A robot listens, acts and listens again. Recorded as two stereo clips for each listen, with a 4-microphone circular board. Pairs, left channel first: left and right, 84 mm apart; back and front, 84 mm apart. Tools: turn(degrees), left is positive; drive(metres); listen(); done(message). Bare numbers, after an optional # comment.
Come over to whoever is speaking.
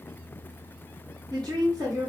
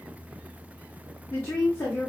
# The woman speaking: 120° right.
turn(-120)
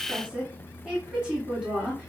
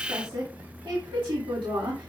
# The woman speaking is now 15° right.
turn(-15)
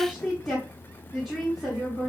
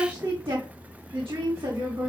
drive(1.0)
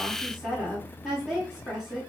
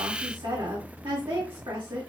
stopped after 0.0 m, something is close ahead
done("Blocked. The woman speaking is further on, straight ahead.")